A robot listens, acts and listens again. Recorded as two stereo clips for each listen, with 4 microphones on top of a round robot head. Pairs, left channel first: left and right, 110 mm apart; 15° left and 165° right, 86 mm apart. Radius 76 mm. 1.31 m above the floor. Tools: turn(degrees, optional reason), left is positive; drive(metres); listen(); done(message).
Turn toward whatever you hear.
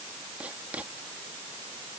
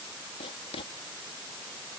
turn(degrees=-10, reason="The writing: 10° right.")
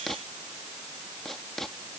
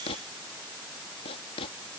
done("Found it: writing, straight ahead.")